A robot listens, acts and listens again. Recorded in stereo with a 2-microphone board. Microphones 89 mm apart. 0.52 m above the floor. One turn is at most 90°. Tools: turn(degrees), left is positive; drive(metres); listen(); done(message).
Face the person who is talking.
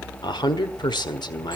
turn(degrees=55)
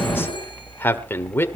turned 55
turn(degrees=30)
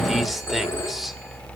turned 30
listen()
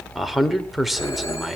done("Found it: a man speaking, straight ahead.")